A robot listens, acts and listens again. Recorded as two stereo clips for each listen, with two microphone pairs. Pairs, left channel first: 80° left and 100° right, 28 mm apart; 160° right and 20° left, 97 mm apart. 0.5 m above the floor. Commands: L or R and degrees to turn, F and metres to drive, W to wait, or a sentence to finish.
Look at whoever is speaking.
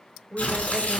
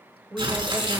R75
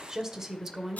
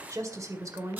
R30
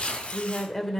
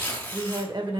L10
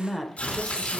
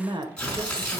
Found it: a woman speaking, straight ahead.